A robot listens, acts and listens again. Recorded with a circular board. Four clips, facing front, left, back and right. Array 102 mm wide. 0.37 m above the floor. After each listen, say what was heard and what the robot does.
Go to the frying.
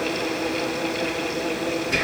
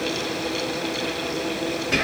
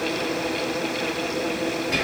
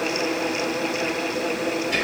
Keep listening.
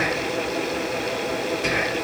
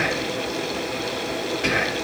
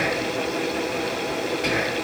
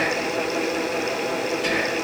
Keep listening.
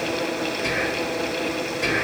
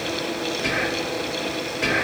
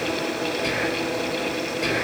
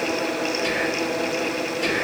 I can't make out frying, only whispering.